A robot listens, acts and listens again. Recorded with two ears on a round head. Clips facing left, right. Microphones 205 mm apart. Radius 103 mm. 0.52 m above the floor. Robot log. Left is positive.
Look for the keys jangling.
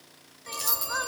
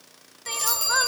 cmd yaw +30
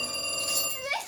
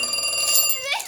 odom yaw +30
note: So it is at 55° right.
cmd yaw -55
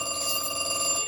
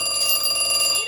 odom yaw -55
cmd idle
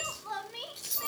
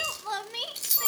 note: The keys jangling is now 35° right.
cmd yaw -35
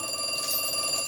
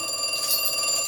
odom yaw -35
note: The keys jangling is now 10° right.
cmd yaw -10
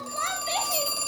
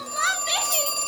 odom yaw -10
cmd idle
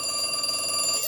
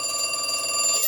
end: Found it: keys jangling, straight ahead, 2 to 4 m away.